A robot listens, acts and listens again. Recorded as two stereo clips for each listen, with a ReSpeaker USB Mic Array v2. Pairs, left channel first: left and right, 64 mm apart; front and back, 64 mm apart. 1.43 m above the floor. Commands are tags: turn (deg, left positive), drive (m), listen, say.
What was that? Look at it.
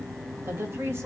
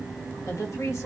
<turn deg="-45"/>
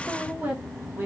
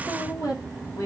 <turn deg="-30"/>
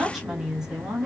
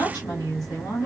<turn deg="-15"/>
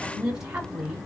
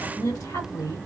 <turn deg="-15"/>
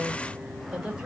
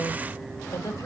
<turn deg="-10"/>
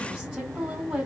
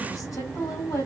<say>Facing the woman speaking, 2 to 4 m away.</say>